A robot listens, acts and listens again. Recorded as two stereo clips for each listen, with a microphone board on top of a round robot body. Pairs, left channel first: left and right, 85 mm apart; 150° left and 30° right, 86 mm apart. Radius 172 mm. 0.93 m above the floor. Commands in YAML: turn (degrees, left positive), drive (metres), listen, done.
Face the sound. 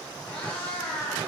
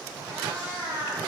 turn: 120
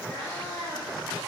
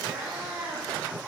turn: 55
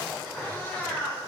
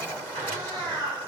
turn: 15
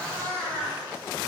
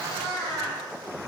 turn: 10
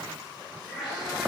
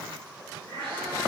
done: "Facing the cat meowing."